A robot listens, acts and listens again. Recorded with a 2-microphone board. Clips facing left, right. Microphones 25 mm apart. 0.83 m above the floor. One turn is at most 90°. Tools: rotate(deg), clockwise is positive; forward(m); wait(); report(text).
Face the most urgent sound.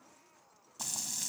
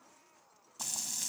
wait()
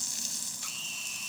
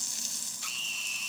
rotate(20)
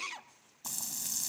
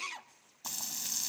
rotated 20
report("Facing the scream, under 1 m away.")